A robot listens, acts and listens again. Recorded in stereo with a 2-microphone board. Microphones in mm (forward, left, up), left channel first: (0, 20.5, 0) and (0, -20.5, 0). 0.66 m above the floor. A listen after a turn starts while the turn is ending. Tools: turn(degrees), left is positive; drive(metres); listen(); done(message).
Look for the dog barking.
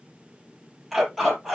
turn(degrees=-30)
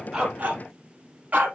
turn(degrees=-135)
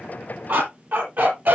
turn(degrees=-50)
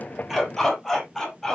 turn(degrees=10)
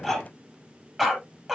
done("Found it: a dog barking, straight ahead.")